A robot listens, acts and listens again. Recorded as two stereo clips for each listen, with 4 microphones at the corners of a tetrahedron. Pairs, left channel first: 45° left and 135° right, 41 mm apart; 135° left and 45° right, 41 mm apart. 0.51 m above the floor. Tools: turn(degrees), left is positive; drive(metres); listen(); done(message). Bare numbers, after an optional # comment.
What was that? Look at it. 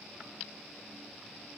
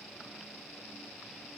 listen()
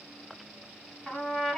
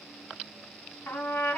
# The trumpet: 125° left.
turn(125)
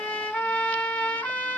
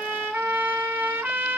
# The trumpet is now 15° right.
turn(-15)
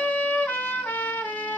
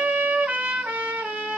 done("Found it: a trumpet, straight ahead, 1 to 2 m away.")